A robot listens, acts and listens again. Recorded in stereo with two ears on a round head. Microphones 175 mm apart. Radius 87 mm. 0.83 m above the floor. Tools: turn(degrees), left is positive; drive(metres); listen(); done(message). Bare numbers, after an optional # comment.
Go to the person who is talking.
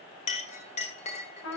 listen()
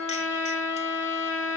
listen()
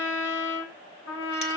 done("I can't make out anyone speaking, only a clink and a trumpet.")